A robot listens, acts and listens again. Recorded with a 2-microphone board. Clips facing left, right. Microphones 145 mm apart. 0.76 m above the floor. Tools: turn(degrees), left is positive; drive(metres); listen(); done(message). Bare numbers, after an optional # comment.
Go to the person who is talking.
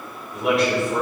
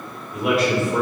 turn(30)
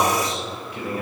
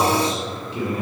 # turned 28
# So it is at 30° right.
turn(-30)
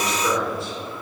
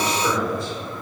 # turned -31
drive(1.0)
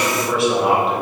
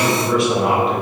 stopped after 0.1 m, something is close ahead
done("Blocked. The man speaking is further on, straight ahead.")